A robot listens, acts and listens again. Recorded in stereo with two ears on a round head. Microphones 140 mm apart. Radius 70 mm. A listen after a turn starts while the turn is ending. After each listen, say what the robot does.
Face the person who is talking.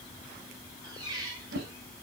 Keep listening.
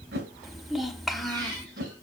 Turn 30° left.
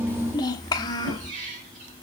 Turn 150° left.
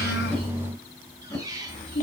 Turn 50° left.
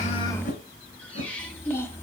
Turn 15° left.
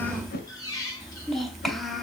Facing the child speaking.